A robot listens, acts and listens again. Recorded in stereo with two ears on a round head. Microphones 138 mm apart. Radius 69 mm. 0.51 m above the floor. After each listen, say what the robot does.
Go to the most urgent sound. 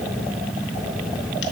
Keep listening.
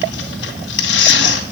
Keep listening.
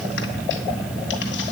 I can't make out anything urgent, only tearing paper.